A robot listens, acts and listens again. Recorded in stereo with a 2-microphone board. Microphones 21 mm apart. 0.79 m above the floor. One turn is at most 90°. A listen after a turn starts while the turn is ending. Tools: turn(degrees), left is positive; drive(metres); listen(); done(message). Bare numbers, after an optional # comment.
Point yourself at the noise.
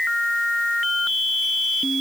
listen()
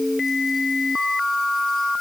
listen()
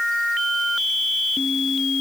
done("I can't make out anything.")